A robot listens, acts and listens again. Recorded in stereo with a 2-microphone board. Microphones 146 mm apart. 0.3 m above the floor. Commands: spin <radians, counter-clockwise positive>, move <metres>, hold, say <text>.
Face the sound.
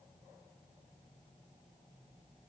hold
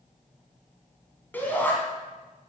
spin 0.52
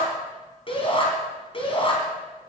spin 2.36
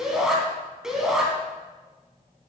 say Found it: a shout, straight ahead.